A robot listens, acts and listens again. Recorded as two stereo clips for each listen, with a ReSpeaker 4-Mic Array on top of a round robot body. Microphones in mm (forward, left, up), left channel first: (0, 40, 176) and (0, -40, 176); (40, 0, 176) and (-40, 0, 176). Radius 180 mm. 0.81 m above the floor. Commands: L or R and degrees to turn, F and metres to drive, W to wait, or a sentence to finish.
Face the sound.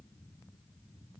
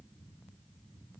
W
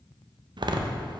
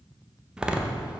R100
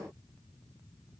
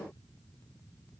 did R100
Facing where the door slam came from. I can't hear it now.